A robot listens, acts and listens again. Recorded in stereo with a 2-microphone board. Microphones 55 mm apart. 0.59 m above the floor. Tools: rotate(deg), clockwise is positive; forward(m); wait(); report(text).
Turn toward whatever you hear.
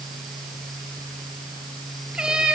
rotate(15)
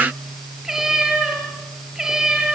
rotate(30)
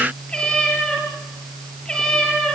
rotate(-15)
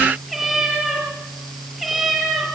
report("Found it: a cat meowing, straight ahead, over 4 m away.")